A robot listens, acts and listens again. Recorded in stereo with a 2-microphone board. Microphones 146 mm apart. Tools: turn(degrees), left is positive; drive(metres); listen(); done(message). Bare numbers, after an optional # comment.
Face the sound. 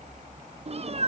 # The cat meowing: about 45° right or 135° right.
turn(-45)
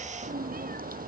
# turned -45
# So it is at 90° right.
turn(-90)
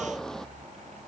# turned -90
done("Facing the cat meowing.")